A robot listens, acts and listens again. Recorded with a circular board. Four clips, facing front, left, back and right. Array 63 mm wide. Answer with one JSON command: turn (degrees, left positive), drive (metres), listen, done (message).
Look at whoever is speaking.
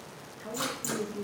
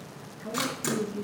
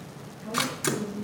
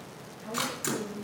{"turn": 50}
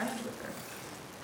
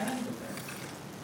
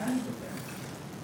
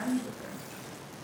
{"turn": -15}
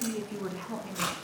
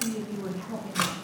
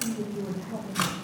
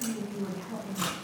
{"turn": 15}
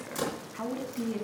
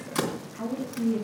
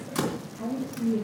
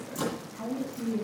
{"turn": 15}
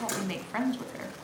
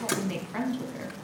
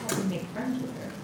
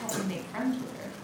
{"turn": 10}
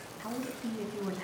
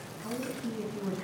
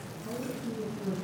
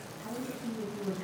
{"done": "Facing the woman speaking, 2 to 4 m away."}